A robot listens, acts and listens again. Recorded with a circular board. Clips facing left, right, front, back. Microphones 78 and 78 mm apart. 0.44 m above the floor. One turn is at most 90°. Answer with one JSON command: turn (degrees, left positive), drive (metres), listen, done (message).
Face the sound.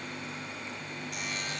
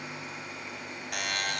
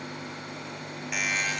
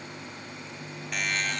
{"turn": -85}
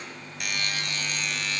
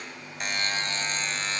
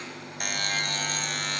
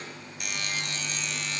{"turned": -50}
{"turn": -35}
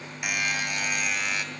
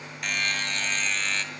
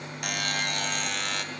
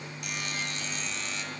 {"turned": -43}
{"turn": 10}
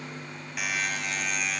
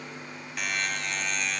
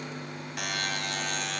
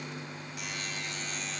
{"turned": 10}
{"done": "Facing the buzzer."}